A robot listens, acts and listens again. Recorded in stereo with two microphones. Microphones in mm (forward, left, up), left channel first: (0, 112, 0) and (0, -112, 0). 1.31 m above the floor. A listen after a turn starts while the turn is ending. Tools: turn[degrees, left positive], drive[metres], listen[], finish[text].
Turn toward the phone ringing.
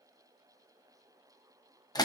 Action: listen[]
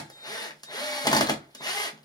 Action: listen[]
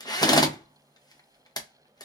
Action: finish[I can't make out a phone ringing to turn to.]